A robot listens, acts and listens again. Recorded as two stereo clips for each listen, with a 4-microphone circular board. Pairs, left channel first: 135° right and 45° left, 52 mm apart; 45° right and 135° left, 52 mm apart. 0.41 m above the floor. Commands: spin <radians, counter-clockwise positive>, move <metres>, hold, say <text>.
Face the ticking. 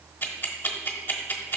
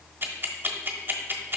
spin 3.14
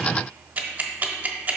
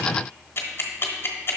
spin -0.17
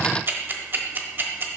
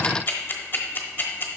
say Facing the ticking, 1 to 2 m away.